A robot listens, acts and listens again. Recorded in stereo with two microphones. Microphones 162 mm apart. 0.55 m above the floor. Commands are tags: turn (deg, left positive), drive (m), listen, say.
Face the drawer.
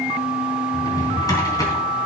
<turn deg="20"/>
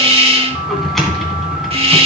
<say>Found it: a drawer, straight ahead.</say>